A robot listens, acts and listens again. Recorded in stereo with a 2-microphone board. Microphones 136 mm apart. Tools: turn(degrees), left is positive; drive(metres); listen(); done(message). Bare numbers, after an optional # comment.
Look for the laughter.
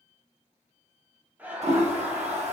turn(-30)
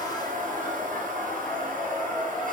# So it is at 20° left.
turn(20)
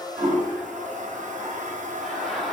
done("Facing the laughter.")